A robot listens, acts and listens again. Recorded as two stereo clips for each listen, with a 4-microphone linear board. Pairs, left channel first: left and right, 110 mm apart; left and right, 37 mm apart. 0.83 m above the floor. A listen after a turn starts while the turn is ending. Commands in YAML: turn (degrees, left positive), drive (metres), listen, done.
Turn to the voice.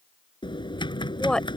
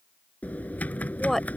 turn: 30
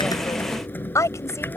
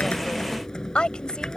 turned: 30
turn: 155
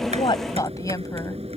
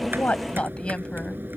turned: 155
turn: 30
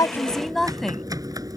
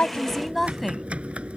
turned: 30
done: "Found it: a woman speaking, straight ahead."